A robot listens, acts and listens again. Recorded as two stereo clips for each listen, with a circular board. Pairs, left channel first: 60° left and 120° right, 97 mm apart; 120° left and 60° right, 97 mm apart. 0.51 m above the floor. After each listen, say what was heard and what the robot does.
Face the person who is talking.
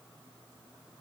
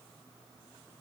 Keep listening.
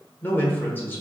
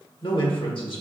The man speaking: 125° left. Turn 125° left.
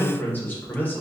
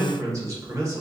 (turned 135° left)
The man speaking is now 10° right. Turn 10° right.
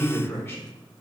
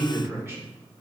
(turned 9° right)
Facing the man speaking, 1 to 2 m away.